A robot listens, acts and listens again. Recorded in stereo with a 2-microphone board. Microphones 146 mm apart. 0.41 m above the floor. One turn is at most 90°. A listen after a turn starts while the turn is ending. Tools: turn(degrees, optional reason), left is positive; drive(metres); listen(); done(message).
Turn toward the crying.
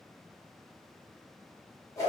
listen()
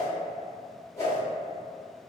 listen()
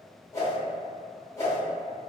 done("I can't make out crying to turn to.")